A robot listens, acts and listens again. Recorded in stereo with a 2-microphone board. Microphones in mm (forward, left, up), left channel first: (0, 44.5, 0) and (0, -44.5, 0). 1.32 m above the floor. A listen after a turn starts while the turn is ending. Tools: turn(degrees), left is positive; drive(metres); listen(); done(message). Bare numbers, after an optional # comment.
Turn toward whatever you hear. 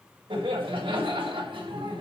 # The laughter: about 70° right or 110° right.
turn(-70)
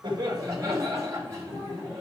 # So it is at 35° right.
turn(-35)
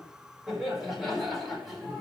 done("Facing the laughter, over 4 m away.")